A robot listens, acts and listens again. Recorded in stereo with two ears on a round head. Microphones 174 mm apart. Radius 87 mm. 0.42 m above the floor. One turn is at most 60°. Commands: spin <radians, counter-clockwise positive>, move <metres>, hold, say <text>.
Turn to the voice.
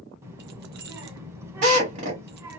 spin -0.52
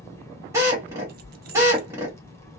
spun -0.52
spin 0.26
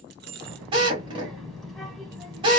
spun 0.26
say Facing the child speaking.